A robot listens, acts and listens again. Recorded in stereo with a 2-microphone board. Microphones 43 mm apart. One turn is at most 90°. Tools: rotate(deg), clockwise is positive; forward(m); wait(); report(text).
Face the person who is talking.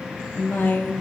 rotate(-60)
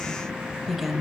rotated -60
report("Facing the woman speaking.")